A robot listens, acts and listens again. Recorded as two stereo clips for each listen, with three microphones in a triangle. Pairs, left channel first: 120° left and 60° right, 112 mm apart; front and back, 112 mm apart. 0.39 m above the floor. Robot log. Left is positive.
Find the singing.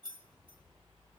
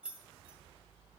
cmd idle
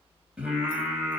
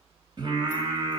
note: The singing: 145° right.
cmd yaw -145
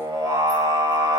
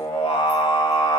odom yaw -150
note: The singing is now 25° right.
cmd yaw -25
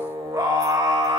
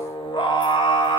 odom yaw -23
note: The singing is now 25° right.
cmd yaw -25
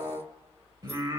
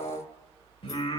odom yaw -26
note: The singing is now 15° right.
cmd yaw -15
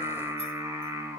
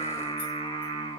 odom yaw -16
end: Facing the singing.